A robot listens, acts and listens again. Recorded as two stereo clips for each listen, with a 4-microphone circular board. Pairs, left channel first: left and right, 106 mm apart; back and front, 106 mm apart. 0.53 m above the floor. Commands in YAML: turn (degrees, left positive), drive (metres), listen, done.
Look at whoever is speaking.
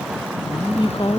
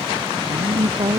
turn: 45
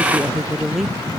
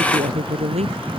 done: "Found it: a woman speaking, straight ahead."